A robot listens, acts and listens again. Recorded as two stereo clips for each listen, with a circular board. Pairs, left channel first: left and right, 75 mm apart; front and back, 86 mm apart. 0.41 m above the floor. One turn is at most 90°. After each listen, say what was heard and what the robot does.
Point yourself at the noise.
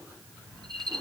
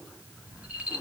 The rattle: 105° right. Turn 90° right.
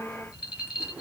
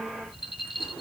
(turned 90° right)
The rattle is now 20° right. Turn 20° right.
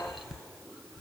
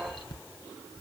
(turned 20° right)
Facing the rattle, 2 to 4 m away.